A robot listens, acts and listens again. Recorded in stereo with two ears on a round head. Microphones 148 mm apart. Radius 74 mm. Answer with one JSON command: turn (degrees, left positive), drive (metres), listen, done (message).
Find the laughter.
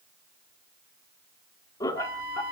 {"turn": 15}
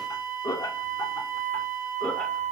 {"turn": 30}
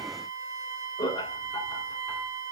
{"turn": 25}
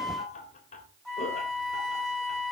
{"turn": 135}
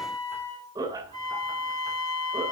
{"turn": -25}
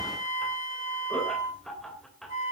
{"done": "Found it: laughter, straight ahead."}